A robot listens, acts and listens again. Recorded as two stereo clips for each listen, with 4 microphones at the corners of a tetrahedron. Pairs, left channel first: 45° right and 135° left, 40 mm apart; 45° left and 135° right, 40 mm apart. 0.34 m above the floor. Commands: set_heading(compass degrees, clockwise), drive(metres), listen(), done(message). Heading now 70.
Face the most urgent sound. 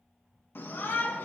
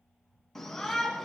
set_heading(105)
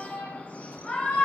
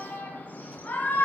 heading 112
done("Found it: a shout, straight ahead, 2 to 4 m away.")